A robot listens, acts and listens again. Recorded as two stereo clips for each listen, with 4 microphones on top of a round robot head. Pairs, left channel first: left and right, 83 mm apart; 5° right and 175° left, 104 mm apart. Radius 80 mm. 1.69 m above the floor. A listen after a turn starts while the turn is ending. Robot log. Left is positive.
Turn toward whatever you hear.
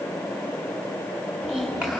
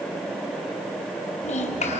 end: Found it: a child speaking, straight ahead, over 4 m away.